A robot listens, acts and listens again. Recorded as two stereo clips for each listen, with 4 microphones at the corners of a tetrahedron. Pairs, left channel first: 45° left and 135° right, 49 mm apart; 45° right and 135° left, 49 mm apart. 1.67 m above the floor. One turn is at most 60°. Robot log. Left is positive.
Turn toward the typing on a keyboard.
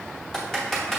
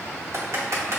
note: The typing on a keyboard: 125° left.
cmd yaw +60
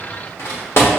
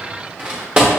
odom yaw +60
note: The typing on a keyboard is now 70° left.
cmd yaw +60
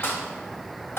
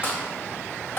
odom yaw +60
end: Facing the typing on a keyboard, 1 to 2 m away.